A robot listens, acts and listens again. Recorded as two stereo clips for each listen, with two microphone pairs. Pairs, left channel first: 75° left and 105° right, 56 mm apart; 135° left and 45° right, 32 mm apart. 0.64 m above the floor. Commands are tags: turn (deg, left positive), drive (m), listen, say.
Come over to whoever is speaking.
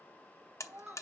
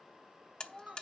<turn deg="-140"/>
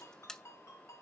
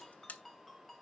<listen/>
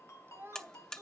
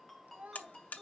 <turn deg="-65"/>
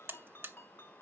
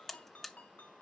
<listen/>
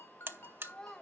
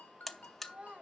<drive m="1.0"/>
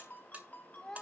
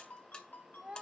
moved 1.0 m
<drive m="1.0"/>
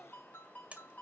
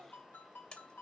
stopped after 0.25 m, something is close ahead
<listen/>
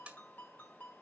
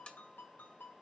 <listen/>
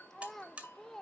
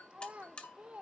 <say>I am next to the child speaking.</say>